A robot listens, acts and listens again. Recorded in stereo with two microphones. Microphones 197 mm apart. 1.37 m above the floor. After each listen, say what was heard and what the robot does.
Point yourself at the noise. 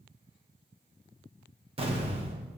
The explosion: about 30° right or 150° right. Turn 30° right.
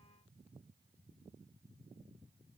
Keep listening.
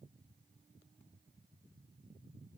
I heard an explosion, but can't make it out now. It was about straight ahead or 120° right.